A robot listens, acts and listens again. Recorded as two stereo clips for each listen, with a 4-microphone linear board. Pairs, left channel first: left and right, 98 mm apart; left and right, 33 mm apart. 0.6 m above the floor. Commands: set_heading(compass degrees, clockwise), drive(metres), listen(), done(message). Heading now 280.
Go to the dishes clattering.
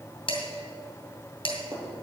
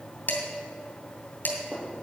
set_heading(215)
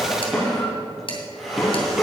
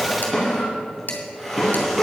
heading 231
set_heading(166)
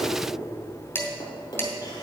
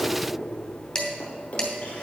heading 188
set_heading(168)
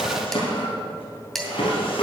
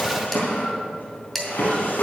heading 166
drive(1.0)
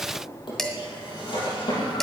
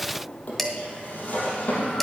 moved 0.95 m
drive(1.0)
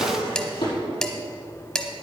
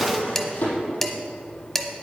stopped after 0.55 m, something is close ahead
done("I am next to the dishes clattering.")